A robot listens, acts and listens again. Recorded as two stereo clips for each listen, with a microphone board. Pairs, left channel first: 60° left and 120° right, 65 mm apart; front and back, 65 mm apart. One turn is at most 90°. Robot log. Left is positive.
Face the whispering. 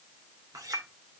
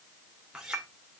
cmd idle
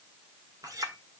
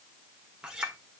cmd idle
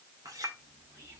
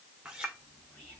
note: The whispering: 70° right.
cmd yaw -70
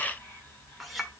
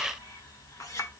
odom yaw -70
end: Facing the whispering, 2 to 4 m away.